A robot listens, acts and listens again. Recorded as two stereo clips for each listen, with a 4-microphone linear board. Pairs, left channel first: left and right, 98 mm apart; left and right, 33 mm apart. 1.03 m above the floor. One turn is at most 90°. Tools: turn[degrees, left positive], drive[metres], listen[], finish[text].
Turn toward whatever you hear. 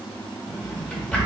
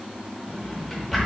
Action: turn[30]
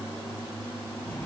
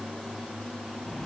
Action: listen[]
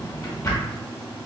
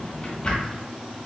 Thought: So it is at 140° left.
Action: turn[90]
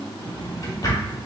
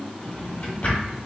Thought: The drawer is now 40° left.
Action: turn[40]
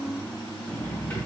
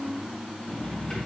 Thought: The drawer is now 20° left.
Action: turn[20]
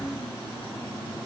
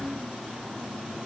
Action: listen[]
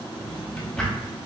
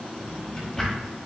Action: finish[Facing the drawer.]